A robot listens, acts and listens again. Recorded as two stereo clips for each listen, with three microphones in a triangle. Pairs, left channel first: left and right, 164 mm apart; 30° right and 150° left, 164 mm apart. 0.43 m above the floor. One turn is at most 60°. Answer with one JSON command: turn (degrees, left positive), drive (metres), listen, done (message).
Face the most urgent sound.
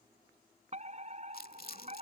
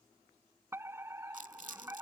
{"turn": -60}
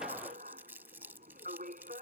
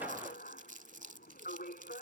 {"turn": -55}
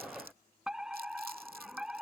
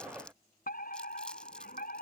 {"done": "Found it: a fire alarm, straight ahead."}